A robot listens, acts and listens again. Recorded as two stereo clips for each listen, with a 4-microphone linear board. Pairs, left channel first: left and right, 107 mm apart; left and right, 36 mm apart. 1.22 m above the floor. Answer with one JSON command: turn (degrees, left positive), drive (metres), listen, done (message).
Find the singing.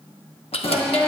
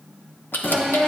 {"turn": 20}
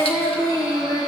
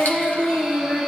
{"turn": 140}
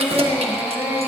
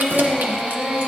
{"turn": -10}
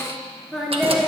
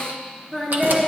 {"done": "Found it: singing, straight ahead."}